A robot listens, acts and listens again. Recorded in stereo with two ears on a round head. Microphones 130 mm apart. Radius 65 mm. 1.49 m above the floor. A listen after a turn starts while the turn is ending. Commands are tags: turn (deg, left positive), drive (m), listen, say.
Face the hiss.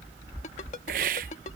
<turn deg="-60"/>
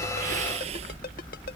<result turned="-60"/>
<listen/>
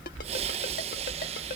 <turn deg="-45"/>
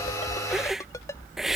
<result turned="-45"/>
<say>Found it: a hiss, straight ahead.</say>